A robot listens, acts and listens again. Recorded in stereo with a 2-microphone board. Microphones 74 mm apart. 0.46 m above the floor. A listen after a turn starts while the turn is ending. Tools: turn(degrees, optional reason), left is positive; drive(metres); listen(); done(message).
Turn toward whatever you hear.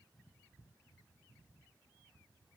listen()
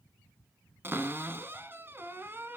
turn(degrees=-30, reason="The cupboard door: about 30° right or 150° right.")
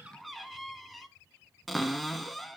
done("Facing the cupboard door, 1 to 2 m away.")